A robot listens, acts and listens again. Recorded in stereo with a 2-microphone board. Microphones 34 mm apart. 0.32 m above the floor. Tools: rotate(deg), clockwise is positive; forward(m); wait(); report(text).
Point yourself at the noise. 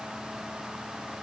wait()
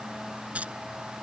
rotate(40)
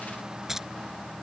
rotate(10)
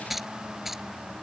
report("Facing the keys jangling.")